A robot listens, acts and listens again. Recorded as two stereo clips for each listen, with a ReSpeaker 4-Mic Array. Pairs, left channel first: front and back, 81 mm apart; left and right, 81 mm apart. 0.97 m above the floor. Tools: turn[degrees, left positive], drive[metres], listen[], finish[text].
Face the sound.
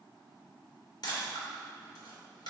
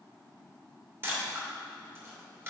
Thought: The camera shutter: 30° right.
Action: turn[-30]
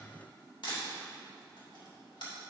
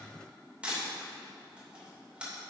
Thought: The camera shutter is now 15° right.
Action: turn[-15]
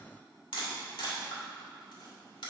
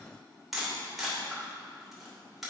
Action: finish[Found it: a camera shutter, straight ahead.]